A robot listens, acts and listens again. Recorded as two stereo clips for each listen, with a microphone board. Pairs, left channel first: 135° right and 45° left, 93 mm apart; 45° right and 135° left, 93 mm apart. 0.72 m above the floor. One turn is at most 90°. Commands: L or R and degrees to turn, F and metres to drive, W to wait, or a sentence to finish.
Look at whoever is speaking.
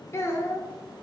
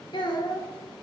R75
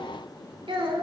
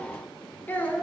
L25
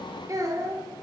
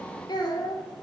Facing the child speaking.